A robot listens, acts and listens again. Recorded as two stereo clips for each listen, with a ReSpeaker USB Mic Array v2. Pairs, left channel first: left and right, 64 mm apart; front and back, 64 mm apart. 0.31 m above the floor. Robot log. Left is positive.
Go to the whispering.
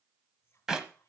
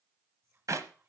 note: The whispering: 140° left.
cmd yaw +140
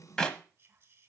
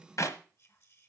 note: The whispering is now 40° right.
cmd yaw -40
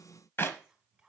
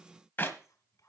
cmd fwd 1.0
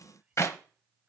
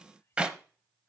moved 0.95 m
note: The whispering is now 15° right.
cmd yaw -15
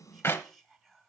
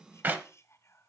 cmd fwd 1.0
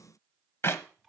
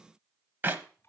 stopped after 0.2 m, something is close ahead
end: Arrived at the whispering, straight ahead.